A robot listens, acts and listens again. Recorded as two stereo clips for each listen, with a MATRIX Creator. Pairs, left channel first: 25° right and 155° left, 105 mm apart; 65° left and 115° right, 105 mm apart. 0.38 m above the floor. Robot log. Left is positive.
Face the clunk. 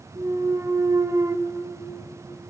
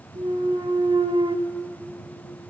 note: The clunk: 145° right.
cmd yaw -145
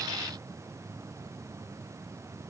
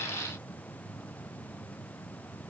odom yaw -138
end: I heard a clunk from this way, but can't make it out now.